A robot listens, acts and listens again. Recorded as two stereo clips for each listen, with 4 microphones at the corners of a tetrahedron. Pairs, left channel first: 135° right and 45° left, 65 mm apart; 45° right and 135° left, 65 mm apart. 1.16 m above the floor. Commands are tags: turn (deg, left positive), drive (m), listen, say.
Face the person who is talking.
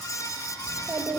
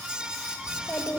<turn deg="35"/>
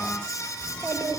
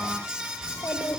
<turn deg="15"/>
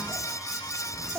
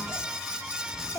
<say>Facing the child speaking.</say>